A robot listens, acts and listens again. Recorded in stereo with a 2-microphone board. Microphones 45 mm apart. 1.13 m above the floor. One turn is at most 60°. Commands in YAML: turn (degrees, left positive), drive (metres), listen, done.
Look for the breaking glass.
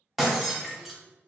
turn: 30
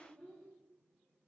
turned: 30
listen: true
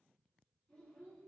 done: "I heard breaking glass, but can't make it out now. It was about 30° right or 150° left."